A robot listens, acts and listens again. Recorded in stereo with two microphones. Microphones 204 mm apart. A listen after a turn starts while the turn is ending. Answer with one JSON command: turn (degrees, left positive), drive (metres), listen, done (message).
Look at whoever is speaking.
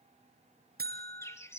{"listen": true}
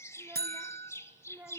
{"turn": -30}
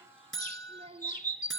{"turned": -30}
{"turn": -140}
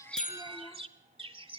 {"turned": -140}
{"listen": true}
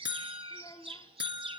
{"turn": 25}
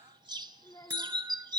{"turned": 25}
{"turn": 20}
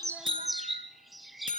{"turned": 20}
{"listen": true}
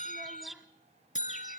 {"listen": true}
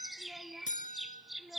{"done": "Facing where the child speaking came from. I can't hear it now."}